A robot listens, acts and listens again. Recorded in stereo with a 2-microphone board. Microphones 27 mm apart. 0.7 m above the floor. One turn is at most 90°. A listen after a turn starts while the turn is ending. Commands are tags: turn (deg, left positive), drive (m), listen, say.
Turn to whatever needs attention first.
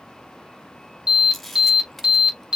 <turn deg="-30"/>
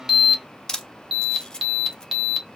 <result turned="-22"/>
<turn deg="-10"/>
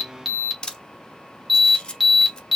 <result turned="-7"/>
<say>Found it: an alarm, straight ahead.</say>